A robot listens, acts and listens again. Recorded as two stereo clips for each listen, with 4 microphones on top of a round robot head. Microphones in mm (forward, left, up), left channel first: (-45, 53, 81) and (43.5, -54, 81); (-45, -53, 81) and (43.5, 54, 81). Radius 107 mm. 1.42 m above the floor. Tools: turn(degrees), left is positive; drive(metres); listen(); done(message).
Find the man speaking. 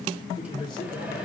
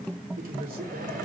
turn(degrees=70)
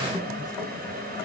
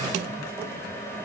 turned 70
listen()
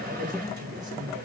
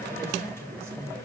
turn(degrees=-20)
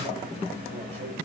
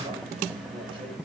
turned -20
listen()
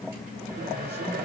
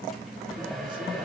listen()
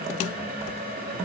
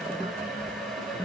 done("I heard a man speaking from this way, but can't make it out now.")